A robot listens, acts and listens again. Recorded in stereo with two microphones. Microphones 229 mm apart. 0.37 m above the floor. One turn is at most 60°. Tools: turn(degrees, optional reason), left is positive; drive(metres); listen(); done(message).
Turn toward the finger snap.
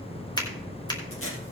turn(degrees=20, reason="The finger snap: about 20° left or 160° left.")
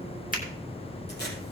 listen()
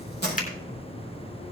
turn(degrees=60, reason="So it is at 145° left.")
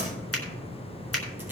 turn(degrees=60, reason="The finger snap is now 90° left.")
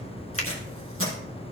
turn(degrees=30, reason="The finger snap is now 30° left.")
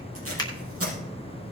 turn(degrees=20, reason="The finger snap is now 20° left.")
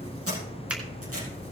listen()
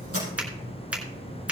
done("Found it: a finger snap, straight ahead.")